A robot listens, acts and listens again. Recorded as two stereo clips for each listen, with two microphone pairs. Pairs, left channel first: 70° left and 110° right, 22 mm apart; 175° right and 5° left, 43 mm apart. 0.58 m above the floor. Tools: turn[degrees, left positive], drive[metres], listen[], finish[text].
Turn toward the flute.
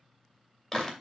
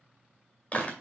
Action: listen[]
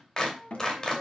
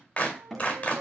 Thought: The flute: 50° left.
Action: turn[50]
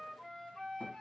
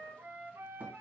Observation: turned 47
Action: finish[Facing the flute.]